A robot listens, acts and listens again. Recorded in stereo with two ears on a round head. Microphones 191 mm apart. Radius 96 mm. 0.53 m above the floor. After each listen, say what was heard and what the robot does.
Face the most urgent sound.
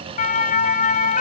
The siren: about 40° left or 140° left. Turn 40° left.
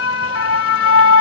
So it is at 100° left. Turn 100° left.
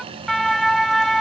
Facing the siren.